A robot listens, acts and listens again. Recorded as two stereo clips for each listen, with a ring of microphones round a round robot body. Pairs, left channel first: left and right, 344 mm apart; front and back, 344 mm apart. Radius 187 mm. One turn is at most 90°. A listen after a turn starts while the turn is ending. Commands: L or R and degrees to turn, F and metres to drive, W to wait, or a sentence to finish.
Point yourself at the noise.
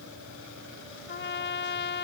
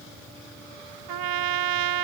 L90
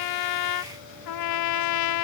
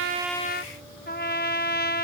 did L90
L65
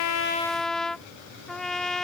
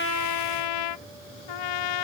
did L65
Found it: a trumpet, straight ahead.